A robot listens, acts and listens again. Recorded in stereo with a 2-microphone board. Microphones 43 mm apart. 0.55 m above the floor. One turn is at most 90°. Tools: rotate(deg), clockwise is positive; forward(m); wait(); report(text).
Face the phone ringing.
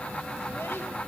wait()
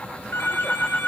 rotate(-60)
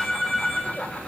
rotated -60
report("Facing the phone ringing.")